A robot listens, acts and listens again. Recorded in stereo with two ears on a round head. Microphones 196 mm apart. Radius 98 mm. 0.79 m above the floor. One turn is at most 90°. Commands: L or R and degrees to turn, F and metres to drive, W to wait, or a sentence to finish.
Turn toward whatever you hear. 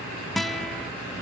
L30
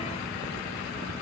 W
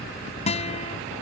L90
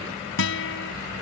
L60
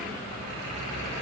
W
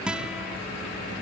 Found it: a guitar, straight ahead.